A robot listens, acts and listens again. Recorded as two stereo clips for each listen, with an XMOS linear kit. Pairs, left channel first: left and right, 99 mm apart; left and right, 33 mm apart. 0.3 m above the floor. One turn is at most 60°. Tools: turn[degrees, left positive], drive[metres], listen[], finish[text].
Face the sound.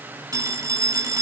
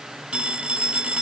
Thought: The phone ringing: about 35° right or 145° right.
Action: turn[-35]
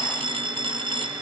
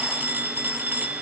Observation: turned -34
Thought: So it is at 105° right.
Action: turn[-60]
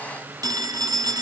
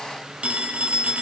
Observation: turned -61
Thought: The phone ringing is now 45° right.
Action: turn[-45]
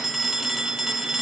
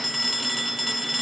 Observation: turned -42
Action: finish[Facing the phone ringing.]